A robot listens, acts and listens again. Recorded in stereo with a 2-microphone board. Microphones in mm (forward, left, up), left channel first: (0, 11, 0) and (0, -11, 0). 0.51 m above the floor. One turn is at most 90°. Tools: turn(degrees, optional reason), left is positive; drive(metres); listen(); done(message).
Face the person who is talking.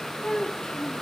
turn(degrees=60, reason="The child speaking: about 60° left or 120° left.")
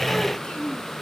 turn(degrees=70, reason="So it is at 70° left.")
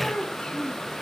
turn(degrees=45, reason="The child speaking is now 45° left.")
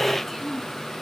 done("Found it: a child speaking, straight ahead.")